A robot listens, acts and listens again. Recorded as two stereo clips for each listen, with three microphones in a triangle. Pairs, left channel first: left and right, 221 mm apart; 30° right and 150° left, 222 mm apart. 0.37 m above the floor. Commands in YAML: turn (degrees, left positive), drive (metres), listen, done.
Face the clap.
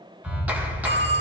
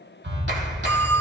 turn: -175
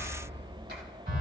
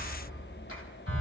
turn: -50
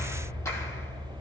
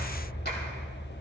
turn: 15
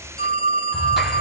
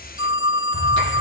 listen: true
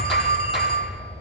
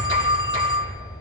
done: "Facing the clap, 2 to 4 m away."